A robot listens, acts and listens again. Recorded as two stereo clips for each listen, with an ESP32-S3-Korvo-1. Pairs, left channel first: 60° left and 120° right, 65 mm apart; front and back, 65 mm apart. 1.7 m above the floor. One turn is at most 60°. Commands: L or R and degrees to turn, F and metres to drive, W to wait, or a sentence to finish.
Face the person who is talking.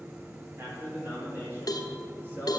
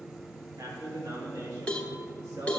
L60
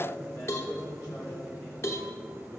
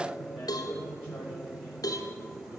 L60
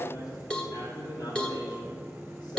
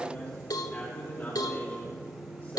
L60
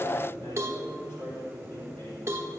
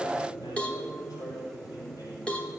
L20
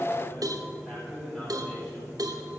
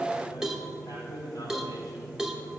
Facing the man speaking, over 4 m away.